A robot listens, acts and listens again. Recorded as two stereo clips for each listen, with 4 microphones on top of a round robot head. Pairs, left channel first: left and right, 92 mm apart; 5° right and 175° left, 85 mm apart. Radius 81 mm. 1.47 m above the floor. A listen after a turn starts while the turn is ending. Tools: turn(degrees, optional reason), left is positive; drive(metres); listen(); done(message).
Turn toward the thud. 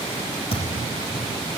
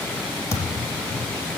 turn(degrees=45, reason="The thud: 45° left.")
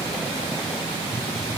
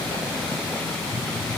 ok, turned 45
done("I heard a thud from this way, but can't make it out now.")